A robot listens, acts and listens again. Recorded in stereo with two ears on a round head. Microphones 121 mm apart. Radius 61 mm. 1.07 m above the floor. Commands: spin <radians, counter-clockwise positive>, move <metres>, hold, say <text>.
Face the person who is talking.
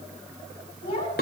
spin 0.79
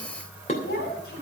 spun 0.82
spin 1.57
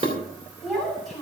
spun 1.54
say Found it: a child speaking, straight ahead, over 4 m away.